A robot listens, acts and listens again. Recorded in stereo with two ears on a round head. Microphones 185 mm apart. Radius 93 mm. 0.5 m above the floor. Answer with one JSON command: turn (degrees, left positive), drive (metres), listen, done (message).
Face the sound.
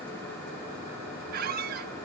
{"turn": -45}
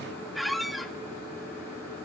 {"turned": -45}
{"done": "Facing the squeak."}